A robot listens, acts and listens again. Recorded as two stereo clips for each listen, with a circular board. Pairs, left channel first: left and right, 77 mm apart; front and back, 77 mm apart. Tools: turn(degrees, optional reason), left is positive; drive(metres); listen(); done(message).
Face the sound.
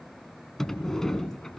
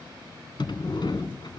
done("Facing the sliding door, 1 to 2 m away.")